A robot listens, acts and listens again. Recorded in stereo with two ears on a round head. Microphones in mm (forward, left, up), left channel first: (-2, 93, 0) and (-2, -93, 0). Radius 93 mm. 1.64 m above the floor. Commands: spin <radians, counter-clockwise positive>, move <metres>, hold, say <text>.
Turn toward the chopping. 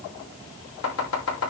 spin 1.57
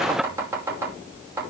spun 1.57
spin -0.17
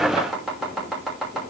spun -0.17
say Facing the chopping, over 4 m away.